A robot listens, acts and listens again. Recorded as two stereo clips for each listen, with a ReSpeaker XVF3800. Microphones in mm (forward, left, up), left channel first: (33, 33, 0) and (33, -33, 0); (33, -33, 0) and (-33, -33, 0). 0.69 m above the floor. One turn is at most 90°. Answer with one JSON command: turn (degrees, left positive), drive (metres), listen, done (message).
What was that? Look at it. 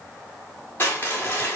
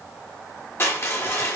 {"turn": 40}
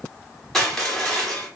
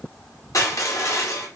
{"done": "Facing the crushing, 1 to 2 m away."}